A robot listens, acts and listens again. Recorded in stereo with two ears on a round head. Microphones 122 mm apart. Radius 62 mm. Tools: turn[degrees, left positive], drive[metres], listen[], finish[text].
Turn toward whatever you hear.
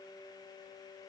Action: listen[]
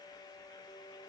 Action: listen[]
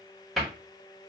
Action: turn[30]
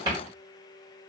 Thought: So it is at 35° right.
Action: turn[-35]
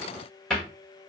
Action: finish[Facing the cupboard door.]